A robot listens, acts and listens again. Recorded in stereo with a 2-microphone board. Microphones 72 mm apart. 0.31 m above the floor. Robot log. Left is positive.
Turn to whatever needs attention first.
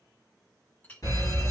note: The fire alarm: about 55° left or 125° left.
cmd yaw +55
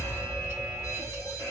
note: So it is at 55° left.
cmd yaw +55
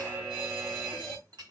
note: The fire alarm is now 20° right.
cmd yaw -20
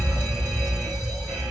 end: Found it: a fire alarm, straight ahead, 2 to 4 m away.